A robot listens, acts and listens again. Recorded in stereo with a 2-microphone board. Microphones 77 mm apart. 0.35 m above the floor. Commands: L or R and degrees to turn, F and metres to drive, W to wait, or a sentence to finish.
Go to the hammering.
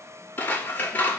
W
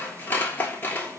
W
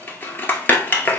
I can't make out hammering, only scissors.